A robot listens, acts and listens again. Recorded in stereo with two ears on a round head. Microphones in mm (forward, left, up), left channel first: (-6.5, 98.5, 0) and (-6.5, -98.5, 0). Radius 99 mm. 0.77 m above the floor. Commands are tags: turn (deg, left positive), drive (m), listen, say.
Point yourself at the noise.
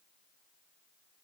<listen/>
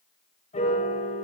<turn deg="30"/>
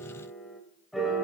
<say>Facing the piano, 1 to 2 m away.</say>